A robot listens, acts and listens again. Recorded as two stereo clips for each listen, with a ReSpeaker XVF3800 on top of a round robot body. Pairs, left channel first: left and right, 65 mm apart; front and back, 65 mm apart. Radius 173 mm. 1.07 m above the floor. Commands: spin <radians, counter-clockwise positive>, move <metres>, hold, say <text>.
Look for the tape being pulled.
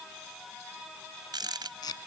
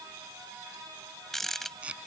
spin 1.83
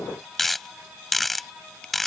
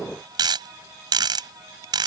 hold
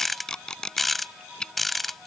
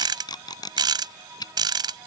spin 0.17
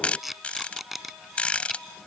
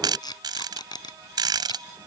say Found it: tape being pulled, straight ahead.